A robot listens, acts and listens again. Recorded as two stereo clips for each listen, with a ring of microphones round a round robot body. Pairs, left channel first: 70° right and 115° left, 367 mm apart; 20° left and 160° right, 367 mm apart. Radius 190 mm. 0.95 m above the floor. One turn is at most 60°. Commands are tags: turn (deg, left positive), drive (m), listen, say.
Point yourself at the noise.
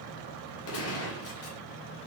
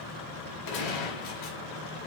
<turn deg="-15"/>
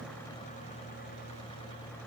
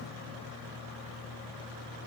<say>I heard a gunshot from this way, but can't make it out now.</say>